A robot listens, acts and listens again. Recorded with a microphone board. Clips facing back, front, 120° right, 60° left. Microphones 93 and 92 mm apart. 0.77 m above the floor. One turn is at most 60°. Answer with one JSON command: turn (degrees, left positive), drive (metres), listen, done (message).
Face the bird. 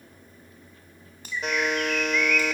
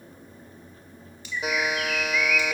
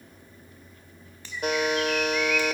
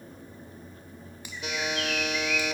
{"turn": 60}
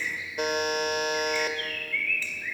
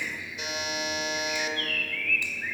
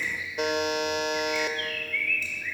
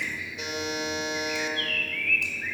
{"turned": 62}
{"turn": 30}
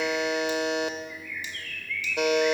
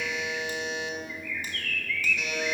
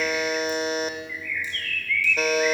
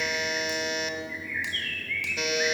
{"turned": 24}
{"done": "Facing the bird, under 1 m away."}